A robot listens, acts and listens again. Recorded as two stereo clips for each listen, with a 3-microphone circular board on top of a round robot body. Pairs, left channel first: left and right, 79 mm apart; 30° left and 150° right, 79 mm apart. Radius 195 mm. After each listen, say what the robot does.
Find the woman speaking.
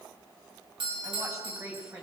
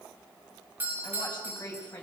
Turn 35° right.
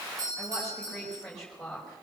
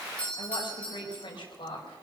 Found it: a woman speaking, straight ahead.